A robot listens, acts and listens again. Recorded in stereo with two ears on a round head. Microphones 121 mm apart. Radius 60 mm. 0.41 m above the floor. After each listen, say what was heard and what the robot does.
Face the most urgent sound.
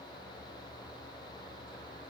Keep listening.
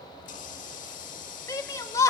The shout: about 20° left or 160° left. Turn 20° left.
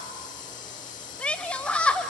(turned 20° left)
So it is at 10° left. Turn 10° left.
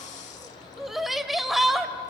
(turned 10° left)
Facing the shout.